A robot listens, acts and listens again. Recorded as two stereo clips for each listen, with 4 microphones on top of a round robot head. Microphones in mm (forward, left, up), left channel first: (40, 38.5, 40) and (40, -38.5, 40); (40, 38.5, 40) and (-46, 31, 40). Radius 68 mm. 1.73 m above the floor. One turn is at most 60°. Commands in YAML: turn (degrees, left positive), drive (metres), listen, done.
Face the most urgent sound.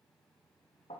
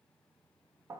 listen: true
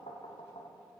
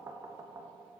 listen: true
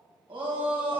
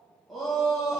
turn: -60
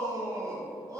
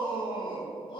turn: -45
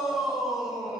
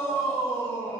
done: "Facing the shout, 2 to 4 m away."